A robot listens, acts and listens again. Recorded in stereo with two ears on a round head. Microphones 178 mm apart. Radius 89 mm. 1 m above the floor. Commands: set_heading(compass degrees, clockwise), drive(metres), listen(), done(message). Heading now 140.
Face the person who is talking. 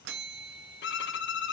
listen()
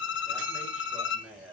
set_heading(170)
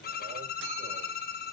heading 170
listen()
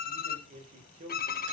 set_heading(315)
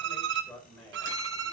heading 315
done("Found it: a man speaking, straight ahead, over 4 m away.")